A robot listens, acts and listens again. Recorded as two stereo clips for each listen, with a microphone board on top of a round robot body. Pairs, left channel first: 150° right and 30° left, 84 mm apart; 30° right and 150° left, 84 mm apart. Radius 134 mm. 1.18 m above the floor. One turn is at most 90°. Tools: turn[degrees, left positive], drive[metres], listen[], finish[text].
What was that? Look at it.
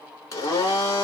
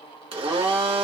Thought: The blender: 155° left.
Action: turn[90]
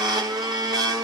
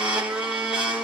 Thought: The blender is now 75° left.
Action: turn[75]
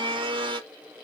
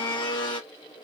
Action: finish[Found it: a blender, straight ahead, 1 to 2 m away.]